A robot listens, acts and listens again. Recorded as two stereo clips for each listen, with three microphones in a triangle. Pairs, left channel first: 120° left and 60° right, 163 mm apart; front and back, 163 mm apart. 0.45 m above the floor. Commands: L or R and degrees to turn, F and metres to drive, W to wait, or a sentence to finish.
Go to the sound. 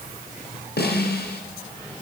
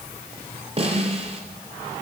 L125
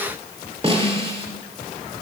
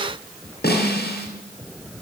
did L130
F1.0
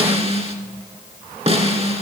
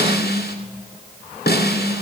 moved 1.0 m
F1.0
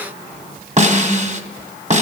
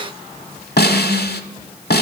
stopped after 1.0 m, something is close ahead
R15
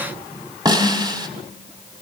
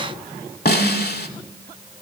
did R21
Arrived at the snare drum, straight ahead.